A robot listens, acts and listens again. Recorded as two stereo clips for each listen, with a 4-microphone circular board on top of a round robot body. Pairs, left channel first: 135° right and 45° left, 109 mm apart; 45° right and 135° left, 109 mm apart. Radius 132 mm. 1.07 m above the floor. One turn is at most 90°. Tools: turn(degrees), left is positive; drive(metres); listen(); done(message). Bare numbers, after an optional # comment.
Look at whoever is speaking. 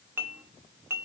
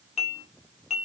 listen()
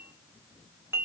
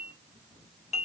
listen()
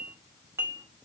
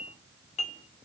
done("I can't make out anyone speaking, only dishes clattering.")